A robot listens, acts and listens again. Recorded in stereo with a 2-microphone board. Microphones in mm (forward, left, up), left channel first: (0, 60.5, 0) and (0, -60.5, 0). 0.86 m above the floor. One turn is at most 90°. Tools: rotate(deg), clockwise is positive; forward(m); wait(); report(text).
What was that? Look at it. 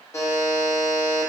rotate(-25)
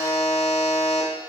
rotate(-90)
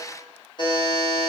rotate(-45)
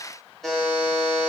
report("Facing the buzzer, under 1 m away.")